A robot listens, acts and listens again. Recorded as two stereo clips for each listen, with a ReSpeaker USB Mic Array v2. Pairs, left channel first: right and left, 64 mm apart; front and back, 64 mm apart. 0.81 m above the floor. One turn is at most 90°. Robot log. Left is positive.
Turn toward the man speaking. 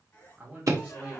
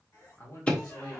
note: The man speaking: 25° left.
cmd yaw +25
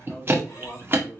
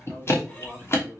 note: The man speaking is now 30° right.
cmd yaw -30
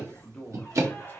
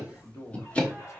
note: The man speaking is now 30° right.
cmd yaw -30
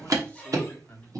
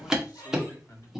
note: The man speaking is now 30° right.
cmd yaw -30
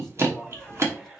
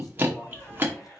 cmd idle
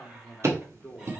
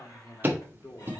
note: The man speaking is now 15° right.
cmd yaw -15
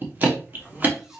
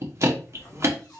cmd idle
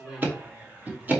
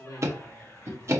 note: The man speaking is now 10° left.
cmd yaw +10
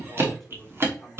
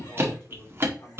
end: Facing the man speaking, 1 to 2 m away.